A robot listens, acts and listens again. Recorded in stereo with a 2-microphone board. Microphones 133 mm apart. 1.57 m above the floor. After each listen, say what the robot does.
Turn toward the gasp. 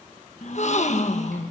Turn 55° left.
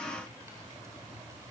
Keep listening.
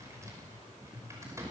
I heard a gasp, but can't make it out now. It was about straight ahead or 70° left.